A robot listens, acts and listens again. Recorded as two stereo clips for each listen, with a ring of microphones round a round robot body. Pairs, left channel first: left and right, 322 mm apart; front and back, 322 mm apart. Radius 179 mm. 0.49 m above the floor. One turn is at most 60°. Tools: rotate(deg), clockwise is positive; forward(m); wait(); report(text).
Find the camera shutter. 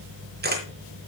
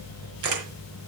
rotate(60)
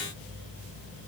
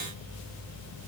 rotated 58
rotate(60)
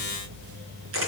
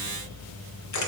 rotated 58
rotate(35)
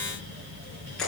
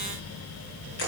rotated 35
report("Facing the camera shutter, 2 to 4 m away.")